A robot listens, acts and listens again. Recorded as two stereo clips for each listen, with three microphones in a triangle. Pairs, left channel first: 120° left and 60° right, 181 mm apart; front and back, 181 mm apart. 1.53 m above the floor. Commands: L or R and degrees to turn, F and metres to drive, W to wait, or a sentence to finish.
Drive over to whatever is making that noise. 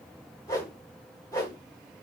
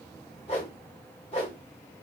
L50
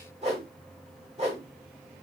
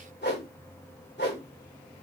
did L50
F1.0
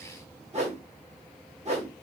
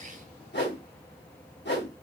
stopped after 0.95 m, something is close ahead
R10
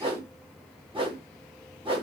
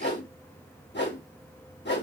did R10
Arrived at the whoosh, straight ahead.